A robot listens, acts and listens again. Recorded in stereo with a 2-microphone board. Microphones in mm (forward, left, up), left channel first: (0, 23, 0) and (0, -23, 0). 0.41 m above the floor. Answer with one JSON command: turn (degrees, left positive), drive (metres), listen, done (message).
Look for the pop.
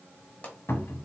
{"turn": 35}
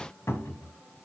{"listen": true}
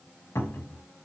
{"done": "I heard a pop, but can't make it out now. It was about straight ahead or 110° left."}